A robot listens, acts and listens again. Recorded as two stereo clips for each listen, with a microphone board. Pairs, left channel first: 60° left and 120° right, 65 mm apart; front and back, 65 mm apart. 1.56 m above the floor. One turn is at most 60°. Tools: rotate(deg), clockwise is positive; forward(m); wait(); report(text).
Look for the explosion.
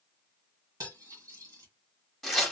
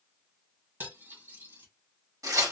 wait()
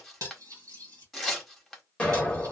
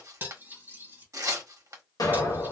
rotate(15)
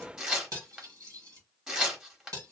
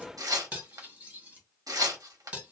report("Facing where the explosion came from. I can't hear it now.")